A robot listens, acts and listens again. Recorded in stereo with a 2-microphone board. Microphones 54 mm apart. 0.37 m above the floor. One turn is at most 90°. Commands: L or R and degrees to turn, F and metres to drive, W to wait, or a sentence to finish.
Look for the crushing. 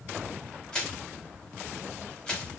L15
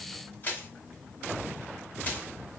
L90
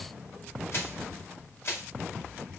L60
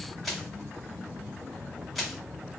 Facing the crushing.